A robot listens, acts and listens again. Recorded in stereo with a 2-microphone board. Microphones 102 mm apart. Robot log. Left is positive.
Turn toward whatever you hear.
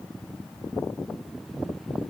cmd idle
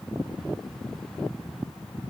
cmd idle
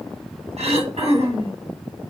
cmd yaw -90
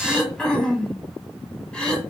note: So it is at 10° left.
cmd yaw +10
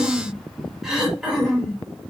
end: Facing the throat clearing.